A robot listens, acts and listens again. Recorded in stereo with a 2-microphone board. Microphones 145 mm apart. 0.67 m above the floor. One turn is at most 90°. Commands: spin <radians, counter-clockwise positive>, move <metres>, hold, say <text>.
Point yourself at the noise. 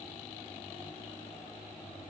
hold
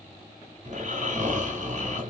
spin -1.05
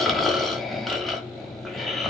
say Facing the snoring, 1 to 2 m away.